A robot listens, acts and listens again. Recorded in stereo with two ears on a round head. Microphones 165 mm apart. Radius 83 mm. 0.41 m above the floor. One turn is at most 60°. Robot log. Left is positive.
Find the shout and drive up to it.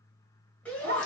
cmd yaw +30
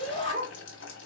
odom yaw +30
note: So it is at 140° left.
cmd yaw +60
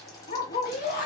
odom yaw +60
note: The shout is now 60° left.
cmd yaw +60
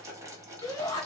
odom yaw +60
note: The shout is now 20° left.
cmd yaw +20
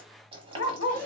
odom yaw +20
note: The shout is now 10° left.
cmd yaw +10
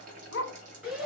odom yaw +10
cmd fwd 1.0
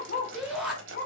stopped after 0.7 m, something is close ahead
end: Arrived at the shout, straight ahead.